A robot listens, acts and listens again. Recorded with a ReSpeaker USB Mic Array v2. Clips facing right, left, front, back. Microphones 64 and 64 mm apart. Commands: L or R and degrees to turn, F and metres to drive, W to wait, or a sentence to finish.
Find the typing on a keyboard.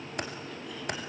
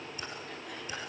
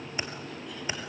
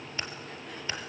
R75
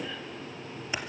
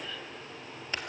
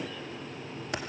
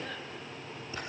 R10
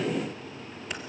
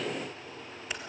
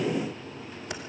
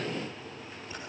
Facing the typing on a keyboard, 2 to 4 m away.